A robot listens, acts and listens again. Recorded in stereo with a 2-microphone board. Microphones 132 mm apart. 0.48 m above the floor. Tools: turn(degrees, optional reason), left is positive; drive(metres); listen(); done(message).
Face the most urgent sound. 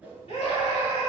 turn(degrees=55, reason="The scream: about 55° left or 125° left.")
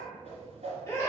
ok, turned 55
turn(degrees=30, reason="So it is at 30° left.")
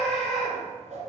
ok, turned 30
done("Facing the scream.")